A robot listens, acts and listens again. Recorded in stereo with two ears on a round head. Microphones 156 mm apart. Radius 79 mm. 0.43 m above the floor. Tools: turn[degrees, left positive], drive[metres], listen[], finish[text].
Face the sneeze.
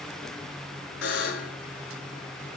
Action: listen[]
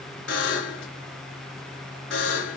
Action: listen[]
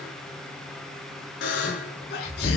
Thought: The sneeze: about 65° left or 115° left.
Action: turn[65]
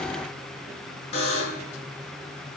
Action: listen[]
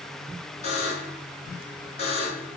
Action: finish[I heard a sneeze, but can't make it out now. It was about straight ahead or 50° left.]